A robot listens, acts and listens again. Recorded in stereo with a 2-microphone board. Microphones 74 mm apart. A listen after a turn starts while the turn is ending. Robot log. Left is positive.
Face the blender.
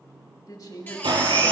cmd yaw -90
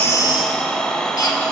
note: So it is at 10° left.
cmd yaw +10
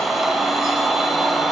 end: Facing the blender, 1 to 2 m away.